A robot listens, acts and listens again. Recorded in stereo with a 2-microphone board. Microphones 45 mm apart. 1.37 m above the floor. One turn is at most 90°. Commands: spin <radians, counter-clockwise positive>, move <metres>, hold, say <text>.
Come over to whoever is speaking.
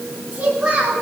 spin -0.44
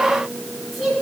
move 1.0
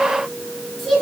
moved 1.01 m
move 1.0
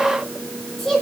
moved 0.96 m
spin 0.17
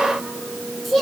move 1.0
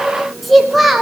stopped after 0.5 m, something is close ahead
say Arrived at the child speaking, straight ahead.